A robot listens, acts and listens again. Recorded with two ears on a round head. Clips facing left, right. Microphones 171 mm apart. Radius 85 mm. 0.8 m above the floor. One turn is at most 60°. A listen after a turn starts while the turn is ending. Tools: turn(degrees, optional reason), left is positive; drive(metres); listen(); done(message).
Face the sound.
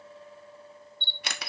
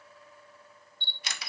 turn(degrees=50, reason="The camera shutter: about 50° left or 130° left.")
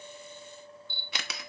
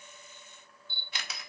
turn(degrees=60, reason="So it is at 70° left.")
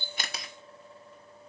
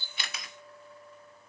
turn(degrees=10, reason="Nothing new. It was at 10° left.")
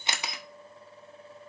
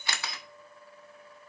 turn(degrees=20, reason="The camera shutter is now 20° left.")
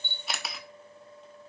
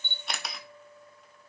done("Facing the camera shutter.")